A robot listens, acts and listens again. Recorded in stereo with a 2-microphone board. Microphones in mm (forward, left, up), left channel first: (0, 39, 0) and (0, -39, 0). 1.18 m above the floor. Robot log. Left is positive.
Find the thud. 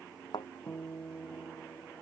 note: The thud: about 75° left or 105° left.
cmd yaw +75
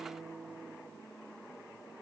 cmd idle
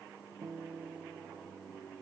end: I heard a thud, but can't make it out now. It was about straight ahead or 30° left.